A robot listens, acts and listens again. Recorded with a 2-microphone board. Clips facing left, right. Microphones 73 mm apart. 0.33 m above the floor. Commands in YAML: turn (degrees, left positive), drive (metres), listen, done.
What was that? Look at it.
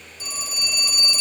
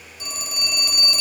turn: -90
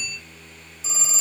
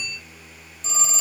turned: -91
turn: 10
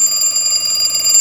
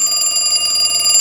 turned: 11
done: "Facing the phone ringing."